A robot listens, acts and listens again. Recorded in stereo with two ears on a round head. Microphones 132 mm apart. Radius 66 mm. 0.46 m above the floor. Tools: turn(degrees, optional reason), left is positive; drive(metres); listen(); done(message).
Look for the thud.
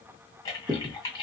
turn(degrees=-35, reason="The thud: about 35° right or 145° right.")
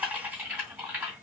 listen()
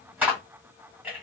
done("I heard a thud, but can't make it out now. It was about straight ahead or 110° right.")